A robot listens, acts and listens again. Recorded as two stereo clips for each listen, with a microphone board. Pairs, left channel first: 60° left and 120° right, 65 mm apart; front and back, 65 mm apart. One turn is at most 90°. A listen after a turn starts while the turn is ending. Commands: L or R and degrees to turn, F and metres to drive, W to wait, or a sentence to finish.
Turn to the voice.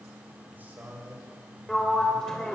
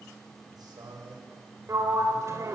L90
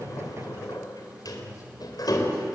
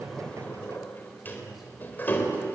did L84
L90
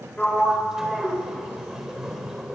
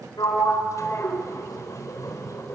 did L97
W
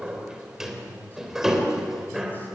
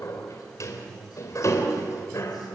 Facing where the man speaking came from. I can't hear it now.